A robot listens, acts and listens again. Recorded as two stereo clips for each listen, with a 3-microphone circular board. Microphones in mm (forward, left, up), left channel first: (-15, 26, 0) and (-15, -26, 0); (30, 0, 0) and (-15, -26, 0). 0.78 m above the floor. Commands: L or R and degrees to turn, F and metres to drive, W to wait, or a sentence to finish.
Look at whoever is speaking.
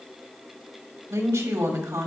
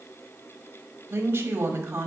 R105
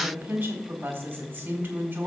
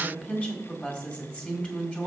R35
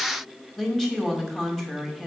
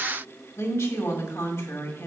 Facing the woman speaking.